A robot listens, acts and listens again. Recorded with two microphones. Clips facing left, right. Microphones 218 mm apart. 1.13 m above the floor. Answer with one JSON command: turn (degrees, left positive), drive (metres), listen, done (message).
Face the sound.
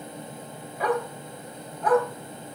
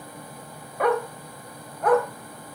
{"turn": -60}
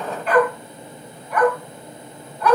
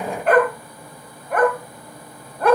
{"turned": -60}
{"turn": -55}
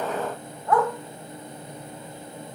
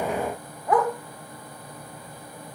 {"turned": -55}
{"turn": -20}
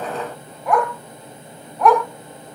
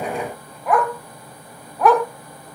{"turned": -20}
{"done": "Found it: a dog barking, straight ahead, 2 to 4 m away."}